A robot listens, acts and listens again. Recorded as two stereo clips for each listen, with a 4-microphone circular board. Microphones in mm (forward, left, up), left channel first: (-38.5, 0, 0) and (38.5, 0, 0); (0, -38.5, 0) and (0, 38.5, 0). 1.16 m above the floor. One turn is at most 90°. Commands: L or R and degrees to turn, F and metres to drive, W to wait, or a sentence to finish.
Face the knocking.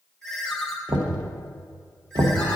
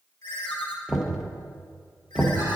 Facing the knocking, under 1 m away.